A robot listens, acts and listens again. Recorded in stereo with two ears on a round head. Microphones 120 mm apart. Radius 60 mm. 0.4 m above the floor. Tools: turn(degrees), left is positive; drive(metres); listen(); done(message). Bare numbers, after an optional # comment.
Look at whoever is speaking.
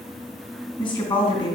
# The woman speaking: about 35° left or 145° left.
turn(35)
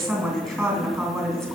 done("Facing the woman speaking, 2 to 4 m away.")